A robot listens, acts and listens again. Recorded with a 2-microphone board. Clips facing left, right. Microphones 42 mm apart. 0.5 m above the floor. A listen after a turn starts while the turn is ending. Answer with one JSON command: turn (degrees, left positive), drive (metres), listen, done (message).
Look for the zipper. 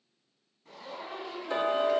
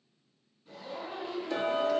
{"turn": 70}
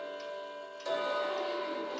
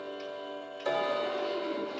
{"listen": true}
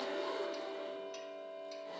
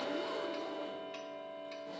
{"listen": true}
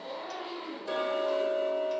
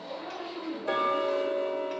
{"turn": 35}
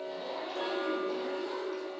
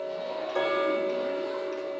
{"listen": true}
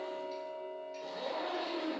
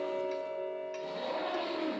{"turn": -15}
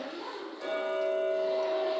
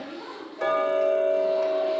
{"done": "Found it: a zipper, straight ahead."}